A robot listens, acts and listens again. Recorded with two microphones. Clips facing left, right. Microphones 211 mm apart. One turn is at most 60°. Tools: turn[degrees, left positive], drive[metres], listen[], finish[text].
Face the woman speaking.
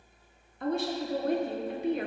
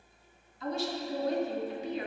Thought: The woman speaking: about 55° left or 125° left.
Action: turn[55]
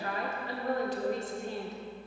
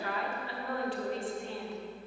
Thought: So it is at 50° left.
Action: turn[50]
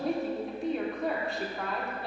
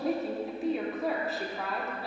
Action: finish[Facing the woman speaking, 1 to 2 m away.]